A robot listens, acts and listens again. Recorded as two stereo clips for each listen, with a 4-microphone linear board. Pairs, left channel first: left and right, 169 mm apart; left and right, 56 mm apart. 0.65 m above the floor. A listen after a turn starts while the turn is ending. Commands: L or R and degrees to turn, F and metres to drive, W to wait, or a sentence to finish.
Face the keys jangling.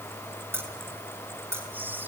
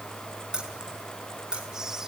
R30
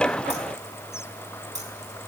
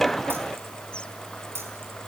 R135
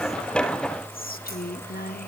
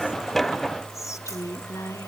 W
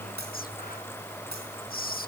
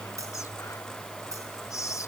R75
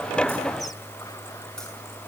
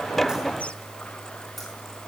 W
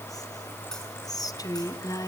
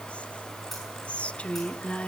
W
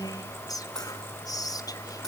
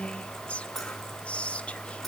Facing where the keys jangling came from. I can't hear it now.